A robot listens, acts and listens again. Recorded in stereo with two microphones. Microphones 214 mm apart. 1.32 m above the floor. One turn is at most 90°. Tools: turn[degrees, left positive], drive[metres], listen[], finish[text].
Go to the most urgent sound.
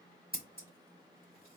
Action: listen[]
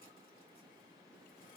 Action: listen[]
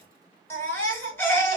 Action: turn[30]
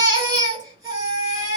Thought: So it is at 20° right.
Action: turn[-20]
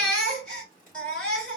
Action: drive[1.0]
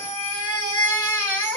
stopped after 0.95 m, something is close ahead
Thought: The baby crying is now 10° left.
Action: turn[10]
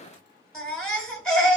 Action: finish[I am next to the baby crying.]